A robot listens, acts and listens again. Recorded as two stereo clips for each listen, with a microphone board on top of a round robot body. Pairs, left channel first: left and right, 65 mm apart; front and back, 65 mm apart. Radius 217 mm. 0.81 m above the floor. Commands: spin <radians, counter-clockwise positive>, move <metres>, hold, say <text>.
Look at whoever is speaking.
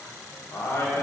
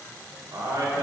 spin 2.18
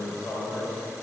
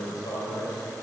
say Found it: a man speaking, straight ahead, 2 to 4 m away.